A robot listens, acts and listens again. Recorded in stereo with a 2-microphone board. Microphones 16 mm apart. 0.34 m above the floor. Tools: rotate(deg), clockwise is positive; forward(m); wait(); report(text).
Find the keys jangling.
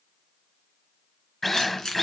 rotate(-40)
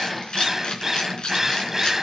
rotate(-105)
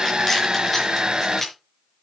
report("Facing the keys jangling.")